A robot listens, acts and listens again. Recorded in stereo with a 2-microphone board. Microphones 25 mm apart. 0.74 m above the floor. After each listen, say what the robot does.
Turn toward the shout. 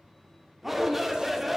Turn 30° right.
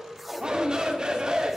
Turn 145° right.
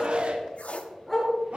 Turn 60° right.
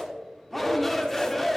Turn 10° left.
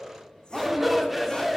Found it: a shout, straight ahead, 1 to 2 m away.